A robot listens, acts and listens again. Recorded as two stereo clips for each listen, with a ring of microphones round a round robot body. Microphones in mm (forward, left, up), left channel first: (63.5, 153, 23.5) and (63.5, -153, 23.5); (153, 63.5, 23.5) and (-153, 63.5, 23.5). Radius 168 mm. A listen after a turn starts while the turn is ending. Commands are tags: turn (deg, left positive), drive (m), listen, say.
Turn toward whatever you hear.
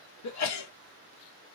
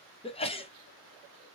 <turn deg="70"/>
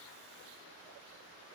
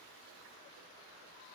<say>Facing where the sneeze came from. I can't hear it now.</say>